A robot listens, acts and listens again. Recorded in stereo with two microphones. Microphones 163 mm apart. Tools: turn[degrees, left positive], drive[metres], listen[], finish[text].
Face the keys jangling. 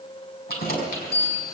Thought: The keys jangling: about 70° left or 110° left.
Action: turn[70]
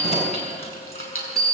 Thought: So it is at 40° left.
Action: turn[40]
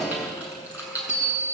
Thought: The keys jangling is now 10° right.
Action: turn[-10]
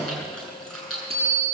Action: finish[Found it: keys jangling, straight ahead, over 4 m away.]